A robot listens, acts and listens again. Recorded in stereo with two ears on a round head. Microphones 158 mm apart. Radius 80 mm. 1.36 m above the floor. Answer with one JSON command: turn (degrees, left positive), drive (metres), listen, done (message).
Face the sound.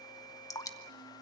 {"turn": 20}
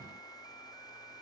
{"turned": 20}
{"listen": true}
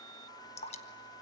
{"turn": 145}
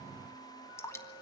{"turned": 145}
{"turn": 15}
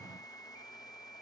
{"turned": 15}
{"listen": true}
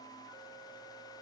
{"done": "Found it: dripping, straight ahead, 1 to 2 m away."}